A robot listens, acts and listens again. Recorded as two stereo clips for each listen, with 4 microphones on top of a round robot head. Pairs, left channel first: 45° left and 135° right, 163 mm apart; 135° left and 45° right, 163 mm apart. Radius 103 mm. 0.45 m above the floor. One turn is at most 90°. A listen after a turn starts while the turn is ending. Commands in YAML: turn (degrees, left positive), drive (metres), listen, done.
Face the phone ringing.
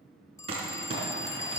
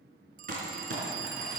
turn: -25
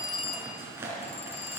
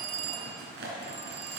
done: "Facing the phone ringing."